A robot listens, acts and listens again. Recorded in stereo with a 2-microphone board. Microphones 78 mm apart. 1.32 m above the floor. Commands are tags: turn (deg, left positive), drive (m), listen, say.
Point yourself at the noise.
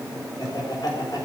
<turn deg="60"/>
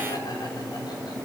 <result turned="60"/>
<listen/>
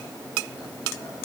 <listen/>
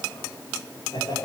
<turn deg="60"/>
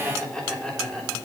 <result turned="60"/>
<say>Found it: laughter, straight ahead.</say>